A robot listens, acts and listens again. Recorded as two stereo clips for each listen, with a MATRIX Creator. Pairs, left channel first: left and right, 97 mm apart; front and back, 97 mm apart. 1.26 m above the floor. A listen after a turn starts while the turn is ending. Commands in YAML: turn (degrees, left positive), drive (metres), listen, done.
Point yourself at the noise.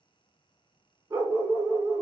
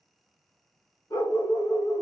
turn: -40
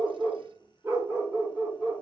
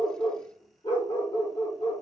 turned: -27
turn: -15
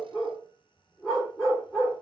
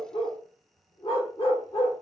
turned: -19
done: "Facing the dog barking, 1 to 2 m away."